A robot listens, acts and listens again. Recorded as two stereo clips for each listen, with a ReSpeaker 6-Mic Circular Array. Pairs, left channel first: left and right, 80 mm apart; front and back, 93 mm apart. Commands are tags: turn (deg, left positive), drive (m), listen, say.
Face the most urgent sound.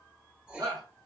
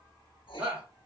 <turn deg="-110"/>
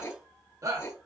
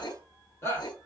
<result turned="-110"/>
<turn deg="-55"/>
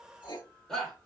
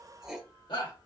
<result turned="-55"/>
<say>Facing the shout, 1 to 2 m away.</say>